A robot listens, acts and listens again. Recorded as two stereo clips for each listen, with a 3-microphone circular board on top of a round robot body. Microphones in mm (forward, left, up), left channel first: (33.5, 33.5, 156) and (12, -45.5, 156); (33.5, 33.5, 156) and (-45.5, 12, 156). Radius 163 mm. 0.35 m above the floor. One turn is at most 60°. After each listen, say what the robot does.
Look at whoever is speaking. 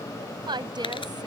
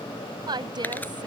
Turn 60° right.
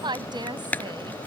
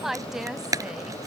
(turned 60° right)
Turn 60° right.
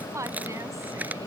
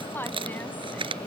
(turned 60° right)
Turn 50° right.
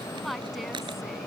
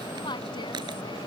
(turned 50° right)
Turn 15° right.
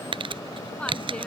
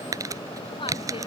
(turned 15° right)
Keep listening.
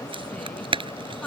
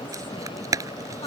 Keep listening.
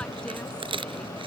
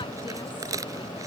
Facing where the woman speaking came from. I can't hear it now.